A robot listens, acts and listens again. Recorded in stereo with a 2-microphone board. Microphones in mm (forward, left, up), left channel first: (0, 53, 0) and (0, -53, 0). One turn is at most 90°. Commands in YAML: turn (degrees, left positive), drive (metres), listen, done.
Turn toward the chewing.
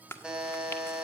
turn: 20
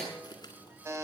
listen: true
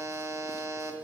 listen: true
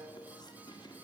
done: "I heard chewing, but can't make it out now. It was about straight ahead or 140° left."